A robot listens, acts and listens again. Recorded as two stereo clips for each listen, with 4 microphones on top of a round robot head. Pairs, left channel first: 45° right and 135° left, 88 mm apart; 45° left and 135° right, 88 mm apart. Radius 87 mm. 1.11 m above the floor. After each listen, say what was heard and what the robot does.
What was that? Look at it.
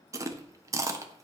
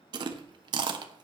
The chewing: 170° right. Turn 170° right.
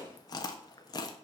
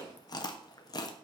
Found it: chewing, straight ahead, 1 to 2 m away.